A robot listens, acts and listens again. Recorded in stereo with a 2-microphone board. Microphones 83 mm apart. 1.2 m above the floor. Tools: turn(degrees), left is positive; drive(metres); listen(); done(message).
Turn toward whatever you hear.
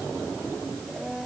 turn(degrees=30)
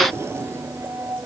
turn(degrees=-30)
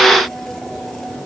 done("Found it: a blender, straight ahead.")